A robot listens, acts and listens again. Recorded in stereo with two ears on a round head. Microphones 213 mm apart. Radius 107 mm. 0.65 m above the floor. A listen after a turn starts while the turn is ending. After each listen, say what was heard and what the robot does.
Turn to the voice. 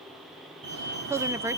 Turn 30° right.
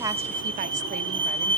Keep listening.
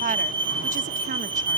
So it is at 140° right. Turn 140° right.
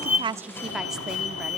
Keep listening.
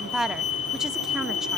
Found it: a woman speaking, straight ahead, under 1 m away.